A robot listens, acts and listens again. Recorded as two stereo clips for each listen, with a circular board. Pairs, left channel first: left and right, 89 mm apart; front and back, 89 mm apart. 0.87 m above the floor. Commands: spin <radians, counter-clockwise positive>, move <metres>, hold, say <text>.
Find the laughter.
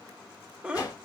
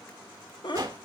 spin -0.26
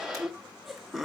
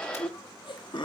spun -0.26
say Facing the laughter, under 1 m away.